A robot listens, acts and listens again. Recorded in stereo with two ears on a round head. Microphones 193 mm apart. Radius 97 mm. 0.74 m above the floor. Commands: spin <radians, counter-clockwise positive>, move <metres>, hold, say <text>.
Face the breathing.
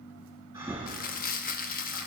spin -0.26
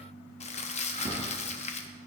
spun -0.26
spin -2.62
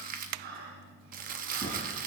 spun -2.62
spin -0.87
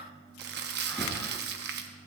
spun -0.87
say Found it: breathing, straight ahead.